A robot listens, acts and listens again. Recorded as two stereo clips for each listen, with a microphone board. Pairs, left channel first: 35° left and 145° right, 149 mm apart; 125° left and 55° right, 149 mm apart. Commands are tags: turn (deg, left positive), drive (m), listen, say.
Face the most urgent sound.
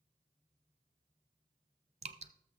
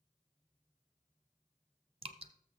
<listen/>
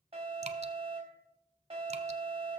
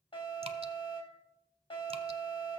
<turn deg="175"/>
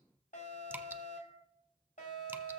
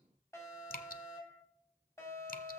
<turn deg="55"/>
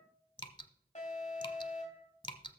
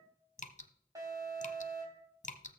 <turn deg="10"/>
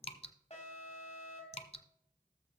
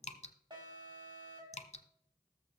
<say>Facing the alarm, 2 to 4 m away.</say>